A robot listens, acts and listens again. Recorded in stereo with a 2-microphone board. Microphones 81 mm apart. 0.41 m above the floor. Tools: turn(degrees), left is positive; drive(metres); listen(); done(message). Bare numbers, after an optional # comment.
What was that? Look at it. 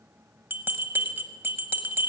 # The bell: about 25° right or 155° right.
turn(-25)
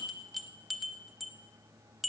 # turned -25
done("Facing the bell, under 1 m away.")